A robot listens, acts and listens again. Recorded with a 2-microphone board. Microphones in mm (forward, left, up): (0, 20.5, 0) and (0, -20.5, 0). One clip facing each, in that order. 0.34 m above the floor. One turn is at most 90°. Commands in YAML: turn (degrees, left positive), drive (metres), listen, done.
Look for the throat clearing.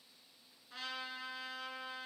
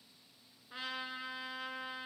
listen: true
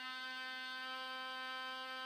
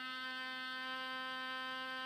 listen: true
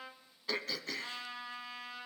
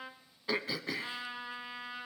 turn: -15
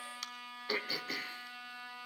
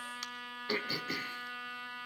done: "Found it: throat clearing, straight ahead, under 1 m away."